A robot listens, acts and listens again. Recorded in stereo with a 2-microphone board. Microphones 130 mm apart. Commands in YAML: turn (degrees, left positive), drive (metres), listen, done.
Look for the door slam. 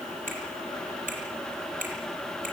listen: true
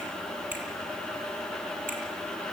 listen: true
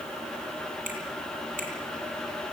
done: "I can't make out a door slam to turn to."